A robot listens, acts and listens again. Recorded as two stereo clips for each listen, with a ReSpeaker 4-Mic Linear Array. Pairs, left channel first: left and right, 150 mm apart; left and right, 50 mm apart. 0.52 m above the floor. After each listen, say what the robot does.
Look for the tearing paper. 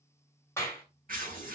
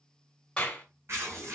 Turn 60° right.
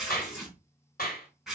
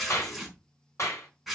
Found it: tearing paper, straight ahead, over 4 m away.